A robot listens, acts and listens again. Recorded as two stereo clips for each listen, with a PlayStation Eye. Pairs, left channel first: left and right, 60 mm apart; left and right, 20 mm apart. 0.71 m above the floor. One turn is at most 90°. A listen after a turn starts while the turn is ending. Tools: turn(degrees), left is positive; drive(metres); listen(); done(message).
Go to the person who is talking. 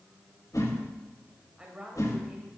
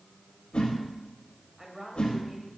turn(degrees=-15)
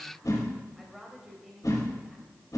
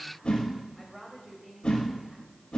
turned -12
drive(metres=1.0)
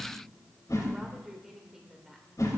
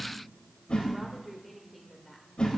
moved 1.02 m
drive(metres=1.0)
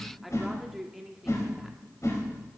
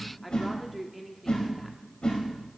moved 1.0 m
drive(metres=1.0)
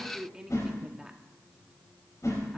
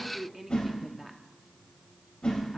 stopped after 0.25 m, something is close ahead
turn(degrees=-15)
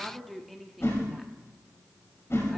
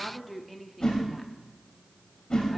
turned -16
done("I am next to the woman speaking.")